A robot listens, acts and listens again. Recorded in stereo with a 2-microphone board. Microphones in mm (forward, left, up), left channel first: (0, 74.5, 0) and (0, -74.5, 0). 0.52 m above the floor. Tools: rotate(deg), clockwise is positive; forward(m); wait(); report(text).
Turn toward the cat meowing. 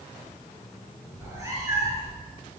rotate(20)
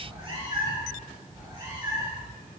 rotate(30)
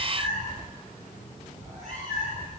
rotate(125)
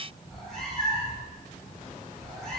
report("Facing the cat meowing.")